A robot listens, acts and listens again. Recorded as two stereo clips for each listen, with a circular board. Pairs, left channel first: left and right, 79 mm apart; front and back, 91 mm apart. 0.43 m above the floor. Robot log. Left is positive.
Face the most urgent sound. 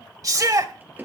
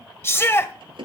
note: The shout: 55° right.
cmd yaw -55
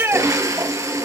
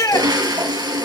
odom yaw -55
note: The shout is now 40° right.
cmd yaw -40
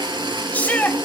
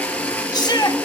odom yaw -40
note: The shout is now 25° left.
cmd yaw +25
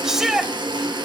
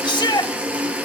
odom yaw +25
end: Facing the shout, 1 to 2 m away.